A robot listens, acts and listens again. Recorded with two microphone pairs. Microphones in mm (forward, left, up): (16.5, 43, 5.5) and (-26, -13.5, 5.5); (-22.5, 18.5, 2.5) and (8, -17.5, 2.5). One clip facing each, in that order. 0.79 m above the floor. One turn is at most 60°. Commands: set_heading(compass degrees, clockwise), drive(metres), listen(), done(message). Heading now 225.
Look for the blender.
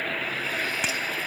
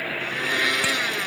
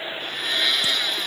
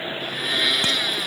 set_heading(285)
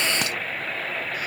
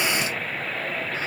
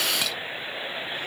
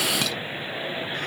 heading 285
set_heading(345)
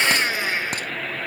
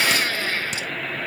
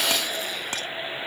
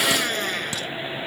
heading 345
set_heading(5)
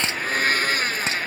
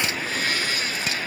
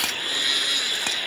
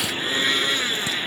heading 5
done("Found it: a blender, straight ahead.")